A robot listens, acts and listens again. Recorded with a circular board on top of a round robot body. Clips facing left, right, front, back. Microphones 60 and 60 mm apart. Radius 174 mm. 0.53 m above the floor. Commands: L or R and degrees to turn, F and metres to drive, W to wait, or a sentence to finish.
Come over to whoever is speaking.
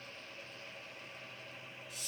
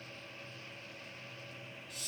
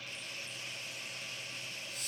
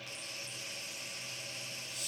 W
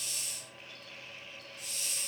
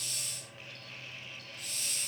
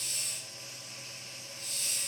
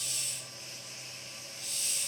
W
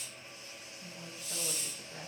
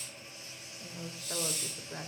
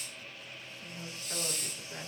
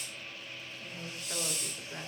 R100
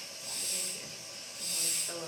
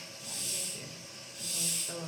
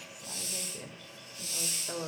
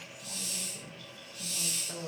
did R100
L10
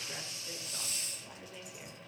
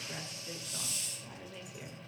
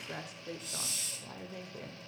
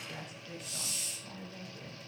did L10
F1.0
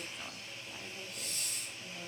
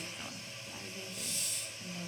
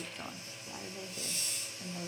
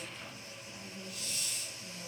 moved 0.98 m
F1.0
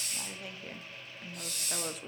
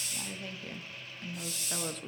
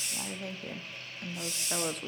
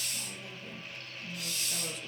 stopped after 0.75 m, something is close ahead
Arrived at the woman speaking, straight ahead.